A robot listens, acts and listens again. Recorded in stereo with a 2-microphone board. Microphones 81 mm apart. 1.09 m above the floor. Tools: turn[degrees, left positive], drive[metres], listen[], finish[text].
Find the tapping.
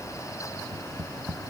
Action: turn[-30]
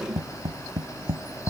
Thought: So it is at 135° right.
Action: turn[-135]
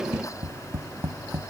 Thought: The tapping is now 25° right.
Action: turn[-25]
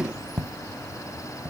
Action: finish[Found it: tapping, straight ahead.]